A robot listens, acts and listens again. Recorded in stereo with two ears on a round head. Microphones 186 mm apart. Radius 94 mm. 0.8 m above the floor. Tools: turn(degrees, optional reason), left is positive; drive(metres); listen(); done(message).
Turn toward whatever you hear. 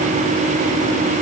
listen()
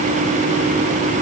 listen()
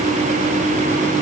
done("I can't make out anything to turn to.")